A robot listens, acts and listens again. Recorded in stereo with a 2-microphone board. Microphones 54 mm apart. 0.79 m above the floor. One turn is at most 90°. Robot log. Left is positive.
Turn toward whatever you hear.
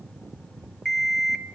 cmd yaw +30
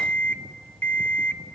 note: So it is at 150° left.
cmd yaw +90
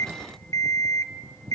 note: The alarm clock is now 80° left.
cmd yaw +80
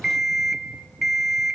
end: Facing the alarm clock.